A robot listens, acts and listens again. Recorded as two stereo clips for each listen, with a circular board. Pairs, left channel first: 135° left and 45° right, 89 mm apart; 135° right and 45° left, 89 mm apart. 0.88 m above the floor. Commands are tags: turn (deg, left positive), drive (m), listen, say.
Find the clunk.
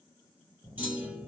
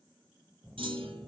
<turn deg="30"/>
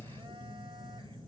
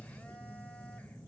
<say>I heard a clunk from this way, but can't make it out now.</say>